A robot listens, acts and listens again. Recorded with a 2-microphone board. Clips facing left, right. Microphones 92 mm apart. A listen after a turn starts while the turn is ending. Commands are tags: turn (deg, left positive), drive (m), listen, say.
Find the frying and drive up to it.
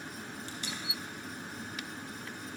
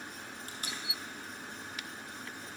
<listen/>
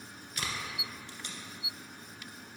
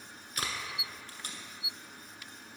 <listen/>
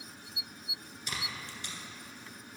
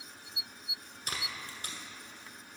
<say>I can't make out frying, only tape being pulled.</say>